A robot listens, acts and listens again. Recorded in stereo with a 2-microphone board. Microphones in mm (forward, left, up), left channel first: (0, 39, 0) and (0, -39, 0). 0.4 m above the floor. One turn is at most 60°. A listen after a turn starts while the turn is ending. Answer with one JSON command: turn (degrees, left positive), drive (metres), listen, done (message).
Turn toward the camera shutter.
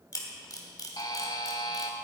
{"turn": 50}
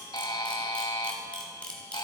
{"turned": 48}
{"turn": 15}
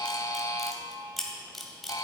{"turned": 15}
{"done": "Found it: a camera shutter, straight ahead."}